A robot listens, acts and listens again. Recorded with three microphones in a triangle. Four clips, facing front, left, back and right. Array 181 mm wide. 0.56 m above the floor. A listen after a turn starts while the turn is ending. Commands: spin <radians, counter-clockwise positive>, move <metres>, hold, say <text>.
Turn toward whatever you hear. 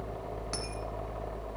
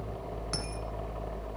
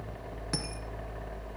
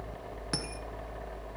spin -2.09
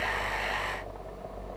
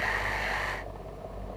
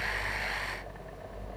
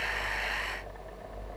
say I heard a dropped coin from this way, but can't make it out now.